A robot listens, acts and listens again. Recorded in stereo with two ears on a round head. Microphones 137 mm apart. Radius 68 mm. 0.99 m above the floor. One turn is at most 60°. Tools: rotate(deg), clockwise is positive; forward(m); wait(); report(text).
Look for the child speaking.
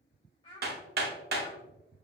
rotate(-35)
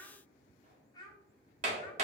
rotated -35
rotate(-25)
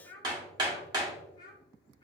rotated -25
rotate(-25)
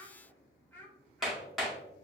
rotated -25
rotate(-10)
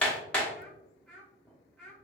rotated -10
report("Found it: a child speaking, straight ahead.")